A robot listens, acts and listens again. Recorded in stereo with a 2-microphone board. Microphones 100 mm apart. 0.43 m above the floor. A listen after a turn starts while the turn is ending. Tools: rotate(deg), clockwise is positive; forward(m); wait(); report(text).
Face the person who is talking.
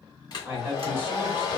rotate(25)
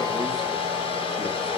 wait()
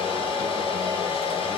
wait()
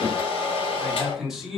report("Found it: a man speaking, straight ahead, 1 to 2 m away.")